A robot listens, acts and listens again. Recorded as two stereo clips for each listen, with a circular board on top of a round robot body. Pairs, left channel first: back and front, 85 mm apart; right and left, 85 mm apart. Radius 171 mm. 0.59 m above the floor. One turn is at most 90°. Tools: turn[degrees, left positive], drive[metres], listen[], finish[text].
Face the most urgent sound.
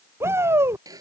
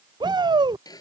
Thought: The shout: 60° left.
Action: turn[60]
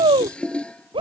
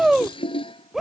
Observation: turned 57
Action: finish[Facing the shout.]